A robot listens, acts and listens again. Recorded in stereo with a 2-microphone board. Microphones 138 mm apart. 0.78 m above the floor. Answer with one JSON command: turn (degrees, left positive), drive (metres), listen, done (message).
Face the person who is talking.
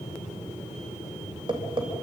{"listen": true}
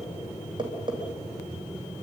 {"listen": true}
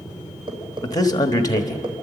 {"turn": 25}
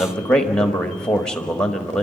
{"done": "Found it: a man speaking, straight ahead, 1 to 2 m away."}